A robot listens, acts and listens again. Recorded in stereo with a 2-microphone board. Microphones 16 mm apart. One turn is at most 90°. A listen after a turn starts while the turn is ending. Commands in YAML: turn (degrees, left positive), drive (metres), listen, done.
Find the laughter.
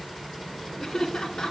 turn: 45
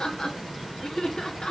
turn: 85
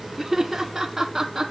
turn: -15
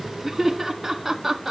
turn: -10
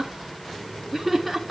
done: "Found it: laughter, straight ahead, 1 to 2 m away."